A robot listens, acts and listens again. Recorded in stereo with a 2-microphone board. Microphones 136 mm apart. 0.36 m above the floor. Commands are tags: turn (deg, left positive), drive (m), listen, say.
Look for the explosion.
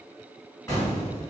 <turn deg="20"/>
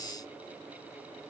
<listen/>
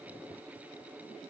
<say>I heard an explosion, but can't make it out now. It was about straight ahead or 140° left.</say>